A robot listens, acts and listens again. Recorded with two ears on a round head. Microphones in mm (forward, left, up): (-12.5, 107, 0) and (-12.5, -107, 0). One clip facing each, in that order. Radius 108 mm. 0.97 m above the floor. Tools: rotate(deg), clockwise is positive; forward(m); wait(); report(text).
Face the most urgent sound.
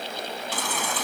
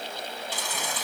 rotate(-45)
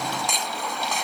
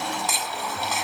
report("Found it: a baby crying, straight ahead.")